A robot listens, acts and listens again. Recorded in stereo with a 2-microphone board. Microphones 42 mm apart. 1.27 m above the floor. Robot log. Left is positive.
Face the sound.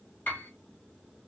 note: The piano: about 40° left or 140° left.
cmd yaw +40
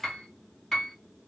note: So it is at 10° left.
cmd yaw +10
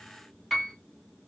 end: Facing the piano.